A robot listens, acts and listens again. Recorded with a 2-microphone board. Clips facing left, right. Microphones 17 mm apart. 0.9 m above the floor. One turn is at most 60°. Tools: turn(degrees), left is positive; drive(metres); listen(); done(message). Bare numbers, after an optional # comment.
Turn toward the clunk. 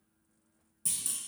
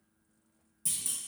turn(30)
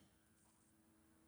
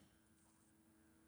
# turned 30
listen()
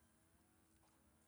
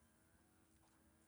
done("I heard a clunk, but can't make it out now. It was about 25° right or 145° left.")